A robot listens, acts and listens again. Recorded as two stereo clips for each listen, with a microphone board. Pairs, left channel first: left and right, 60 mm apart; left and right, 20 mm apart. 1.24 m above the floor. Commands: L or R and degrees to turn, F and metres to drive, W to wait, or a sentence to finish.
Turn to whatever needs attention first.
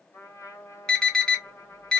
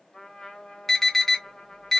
L30
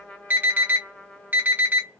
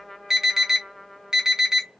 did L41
R30
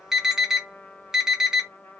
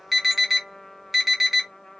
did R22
R10
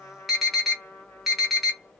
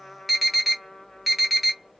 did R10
Found it: an alarm, straight ahead.